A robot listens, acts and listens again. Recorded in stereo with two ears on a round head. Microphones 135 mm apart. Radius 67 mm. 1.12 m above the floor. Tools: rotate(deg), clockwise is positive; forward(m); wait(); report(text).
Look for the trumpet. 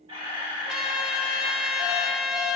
rotate(30)
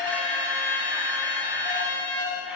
rotate(145)
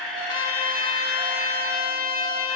rotate(-35)
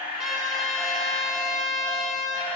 report("Facing the trumpet, 2 to 4 m away.")